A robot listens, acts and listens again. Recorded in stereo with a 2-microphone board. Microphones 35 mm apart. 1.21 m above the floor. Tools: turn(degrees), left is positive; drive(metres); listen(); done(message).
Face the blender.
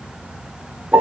listen()
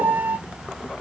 listen()
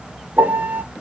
done("I can't make out a blender to turn to.")